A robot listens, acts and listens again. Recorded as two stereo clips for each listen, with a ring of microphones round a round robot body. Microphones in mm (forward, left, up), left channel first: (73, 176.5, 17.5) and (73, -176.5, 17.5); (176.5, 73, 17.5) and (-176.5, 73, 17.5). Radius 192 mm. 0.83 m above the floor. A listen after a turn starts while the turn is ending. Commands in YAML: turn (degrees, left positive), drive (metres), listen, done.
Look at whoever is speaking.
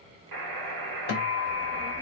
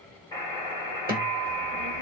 turn: 175
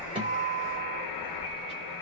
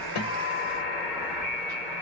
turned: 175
turn: -15
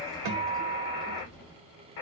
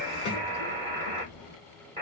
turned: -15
done: "Found it: a child speaking, straight ahead, under 1 m away."